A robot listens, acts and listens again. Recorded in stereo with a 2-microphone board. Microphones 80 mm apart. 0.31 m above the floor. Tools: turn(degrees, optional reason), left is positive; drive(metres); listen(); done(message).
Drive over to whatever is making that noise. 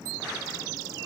listen()
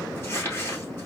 turn(degrees=30, reason="The crumpling: about 30° left or 150° left.")
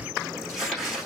drive(metres=1.0)
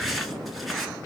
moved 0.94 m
drive(metres=1.0)
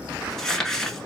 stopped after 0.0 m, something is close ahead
done("I am next to the crumpling.")